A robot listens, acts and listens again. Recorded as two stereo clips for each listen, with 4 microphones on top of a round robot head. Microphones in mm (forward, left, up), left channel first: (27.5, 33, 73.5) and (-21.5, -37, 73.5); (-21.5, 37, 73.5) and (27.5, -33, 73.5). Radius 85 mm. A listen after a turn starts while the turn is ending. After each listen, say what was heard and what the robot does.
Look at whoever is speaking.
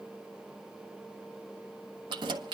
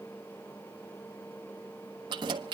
Keep listening.
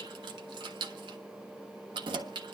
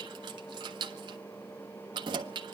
Keep listening.
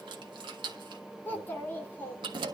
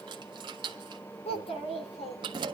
The child speaking: 125° left. Turn 125° left.
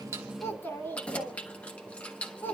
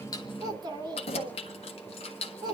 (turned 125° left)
The child speaking is now 10° right. Turn 10° right.
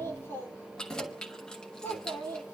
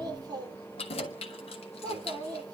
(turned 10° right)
Found it: a child speaking, straight ahead, 2 to 4 m away.